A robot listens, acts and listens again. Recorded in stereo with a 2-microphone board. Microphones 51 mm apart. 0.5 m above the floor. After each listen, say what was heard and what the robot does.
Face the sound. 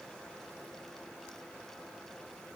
Keep listening.
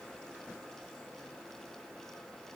Keep listening.
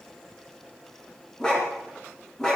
Turn 30° left.
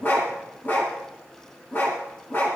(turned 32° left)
So it is at 135° left. Turn 135° left.
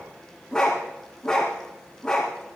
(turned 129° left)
The dog barking is now 10° left. Turn 10° left.
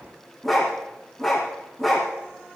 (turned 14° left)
Facing the dog barking, 2 to 4 m away.